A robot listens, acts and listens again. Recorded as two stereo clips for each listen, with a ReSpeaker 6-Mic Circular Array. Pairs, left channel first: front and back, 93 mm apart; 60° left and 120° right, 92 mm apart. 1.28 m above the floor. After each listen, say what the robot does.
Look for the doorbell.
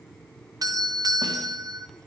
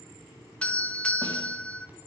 Turn 135° left.
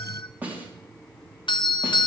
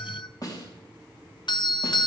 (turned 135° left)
Turn 25° left.
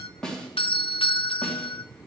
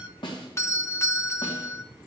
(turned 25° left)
Found it: a doorbell, straight ahead.